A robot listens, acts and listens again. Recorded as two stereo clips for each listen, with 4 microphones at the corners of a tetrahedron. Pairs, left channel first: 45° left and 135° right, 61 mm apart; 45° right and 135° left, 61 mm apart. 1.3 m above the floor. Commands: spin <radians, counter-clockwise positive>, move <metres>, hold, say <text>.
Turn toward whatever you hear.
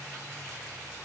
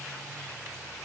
hold
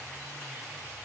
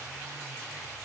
hold
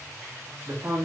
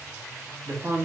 spin 2.97
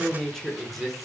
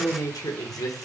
spin -0.79
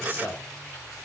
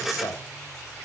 spin -0.26
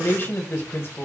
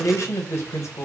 say Facing the man speaking, 1 to 2 m away.